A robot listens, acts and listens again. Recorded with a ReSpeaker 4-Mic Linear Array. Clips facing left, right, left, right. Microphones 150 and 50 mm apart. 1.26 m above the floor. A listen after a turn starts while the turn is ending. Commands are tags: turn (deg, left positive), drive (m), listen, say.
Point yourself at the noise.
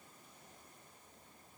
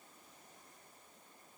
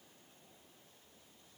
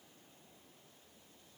<listen/>
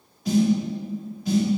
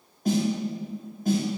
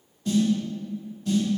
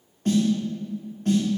<turn deg="-50"/>
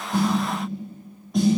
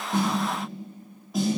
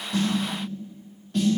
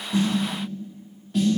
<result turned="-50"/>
<say>Facing the snare drum, 1 to 2 m away.</say>